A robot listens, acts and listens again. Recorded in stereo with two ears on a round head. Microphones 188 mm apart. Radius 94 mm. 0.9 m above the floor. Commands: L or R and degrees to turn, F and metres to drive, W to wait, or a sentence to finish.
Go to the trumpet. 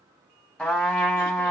L30
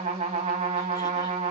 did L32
R30
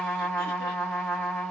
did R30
F1.0
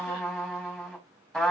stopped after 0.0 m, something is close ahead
Blocked. The trumpet is further on, straight ahead.